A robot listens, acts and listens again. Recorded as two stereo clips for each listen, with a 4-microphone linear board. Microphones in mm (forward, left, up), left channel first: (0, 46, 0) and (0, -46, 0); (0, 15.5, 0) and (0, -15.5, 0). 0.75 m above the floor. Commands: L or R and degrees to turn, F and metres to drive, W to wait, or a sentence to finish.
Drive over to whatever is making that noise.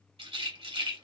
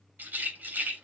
R90
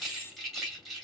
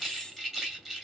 F1.0
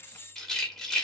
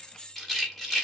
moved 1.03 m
F1.0
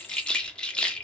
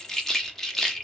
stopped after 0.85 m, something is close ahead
L10
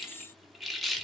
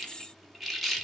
Arrived at the rattle, straight ahead.